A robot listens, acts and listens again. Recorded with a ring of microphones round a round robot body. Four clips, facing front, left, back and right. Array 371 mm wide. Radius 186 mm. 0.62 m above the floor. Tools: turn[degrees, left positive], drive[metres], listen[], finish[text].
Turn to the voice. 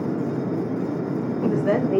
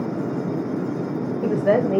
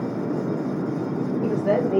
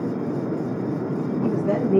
Thought: The woman speaking: 85° left.
Action: turn[85]
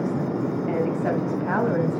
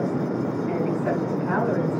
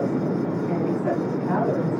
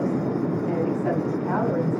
Action: listen[]
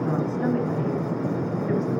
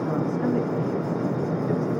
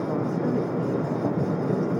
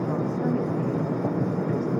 Action: listen[]
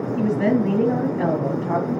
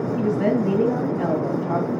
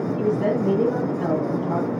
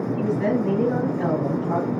Action: finish[Facing the woman speaking, over 4 m away.]